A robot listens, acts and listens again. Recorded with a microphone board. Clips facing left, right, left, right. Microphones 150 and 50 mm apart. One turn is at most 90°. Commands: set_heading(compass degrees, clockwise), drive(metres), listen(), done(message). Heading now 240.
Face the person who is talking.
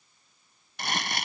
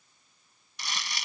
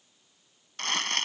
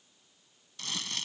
listen()
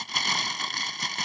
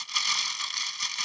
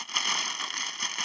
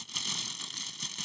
listen()
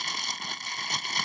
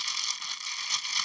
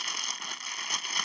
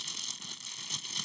done("I can't make out anyone speaking to turn to.")